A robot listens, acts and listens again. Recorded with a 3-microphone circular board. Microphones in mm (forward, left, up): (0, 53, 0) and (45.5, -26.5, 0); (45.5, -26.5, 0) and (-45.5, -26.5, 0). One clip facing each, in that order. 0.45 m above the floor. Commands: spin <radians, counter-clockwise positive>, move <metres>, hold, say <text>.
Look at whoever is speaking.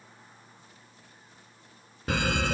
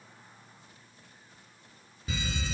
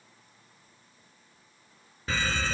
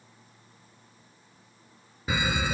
hold
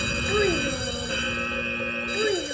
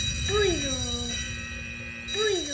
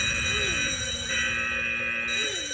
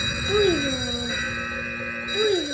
spin -2.79
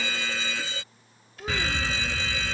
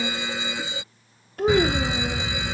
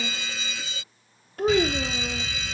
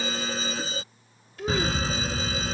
spin -0.61
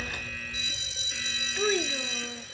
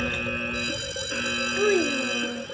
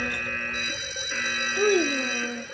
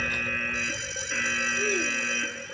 spin 0.17
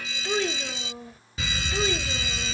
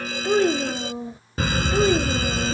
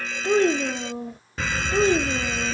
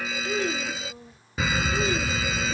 say Facing the child speaking.